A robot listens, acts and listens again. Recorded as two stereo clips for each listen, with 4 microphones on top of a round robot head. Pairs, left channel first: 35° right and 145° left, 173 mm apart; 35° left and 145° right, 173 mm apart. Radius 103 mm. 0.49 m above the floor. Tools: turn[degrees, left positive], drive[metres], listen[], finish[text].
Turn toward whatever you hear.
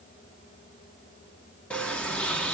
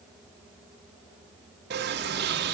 Thought: The sliding door: 115° right.
Action: turn[-115]
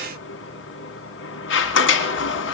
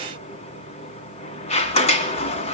Thought: The sliding door is now 20° right.
Action: turn[-20]
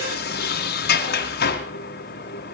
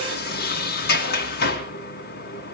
Action: finish[Facing the sliding door.]